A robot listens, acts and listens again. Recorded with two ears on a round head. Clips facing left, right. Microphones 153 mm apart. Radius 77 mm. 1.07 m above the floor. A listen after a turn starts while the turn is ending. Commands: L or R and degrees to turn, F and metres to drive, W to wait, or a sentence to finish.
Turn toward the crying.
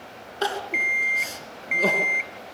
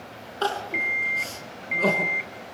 L30
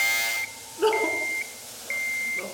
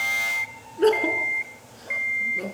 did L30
R15
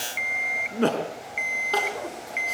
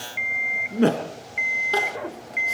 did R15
Found it: crying, straight ahead.